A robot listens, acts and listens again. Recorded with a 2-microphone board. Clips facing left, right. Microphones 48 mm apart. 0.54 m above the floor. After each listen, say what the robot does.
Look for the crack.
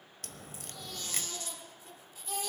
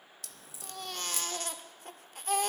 Turn 50° left.
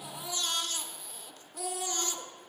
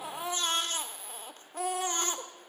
Keep listening.
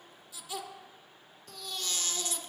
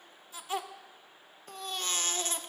I heard a crack, but can't make it out now. It was about straight ahead or 80° left.